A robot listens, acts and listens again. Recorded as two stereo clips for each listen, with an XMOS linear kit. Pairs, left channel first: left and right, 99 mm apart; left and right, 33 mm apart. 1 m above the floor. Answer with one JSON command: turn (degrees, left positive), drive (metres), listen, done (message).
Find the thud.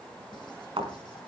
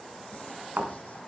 {"turn": -65}
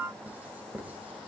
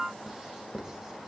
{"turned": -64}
{"listen": true}
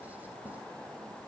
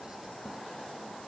{"done": "I heard a thud, but can't make it out now. It was about straight ahead or 50° right."}